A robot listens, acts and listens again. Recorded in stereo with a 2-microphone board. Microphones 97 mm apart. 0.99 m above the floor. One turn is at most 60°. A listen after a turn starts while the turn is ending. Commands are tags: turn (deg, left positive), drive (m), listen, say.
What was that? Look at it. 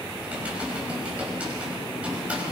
<turn deg="-30"/>
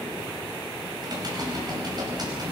<turn deg="-60"/>
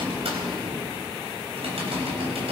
<turn deg="-60"/>
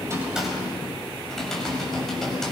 <say>Found it: typing on a keyboard, straight ahead.</say>